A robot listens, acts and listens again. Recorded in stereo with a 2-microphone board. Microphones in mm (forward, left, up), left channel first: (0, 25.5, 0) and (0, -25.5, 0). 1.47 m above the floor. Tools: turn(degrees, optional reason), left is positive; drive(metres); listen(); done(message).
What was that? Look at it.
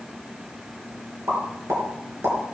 turn(degrees=-65, reason="The pop: about 65° right or 115° right.")
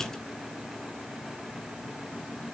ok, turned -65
listen()
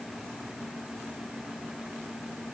done("I heard a pop, but can't make it out now. It was about straight ahead or 50° right.")